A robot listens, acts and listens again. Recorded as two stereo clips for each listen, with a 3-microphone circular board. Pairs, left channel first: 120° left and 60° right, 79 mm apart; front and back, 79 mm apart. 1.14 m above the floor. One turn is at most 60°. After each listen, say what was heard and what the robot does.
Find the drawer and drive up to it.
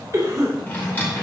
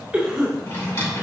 The drawer: 55° left. Turn 55° left.
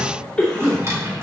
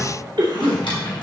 Drive 1.0 m forward.
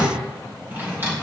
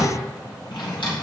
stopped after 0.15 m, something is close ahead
Blocked. The drawer is further on, straight ahead.